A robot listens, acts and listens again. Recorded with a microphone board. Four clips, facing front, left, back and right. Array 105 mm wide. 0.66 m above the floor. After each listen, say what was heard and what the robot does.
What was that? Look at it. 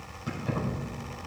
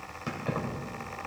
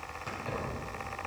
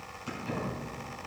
The keys jangling: 95° left. Turn 95° left.
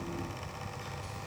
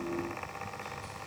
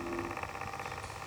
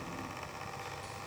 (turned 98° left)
Keep listening.
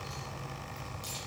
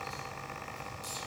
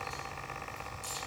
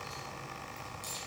Found it: keys jangling, straight ahead, 2 to 4 m away.